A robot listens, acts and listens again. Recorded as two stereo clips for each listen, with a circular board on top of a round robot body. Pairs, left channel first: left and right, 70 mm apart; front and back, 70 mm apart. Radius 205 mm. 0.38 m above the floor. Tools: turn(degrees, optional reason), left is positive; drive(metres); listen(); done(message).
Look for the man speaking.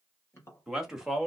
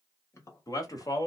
done("Found it: a man speaking, straight ahead.")